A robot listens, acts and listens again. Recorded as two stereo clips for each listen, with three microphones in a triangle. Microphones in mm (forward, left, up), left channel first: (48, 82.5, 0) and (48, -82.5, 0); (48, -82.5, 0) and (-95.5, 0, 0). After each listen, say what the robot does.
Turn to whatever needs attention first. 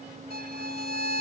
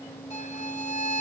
Keep listening.
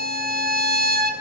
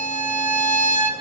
Keep listening.
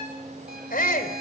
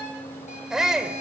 Turn 65° left.
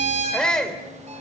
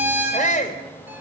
Found it: a shout, straight ahead.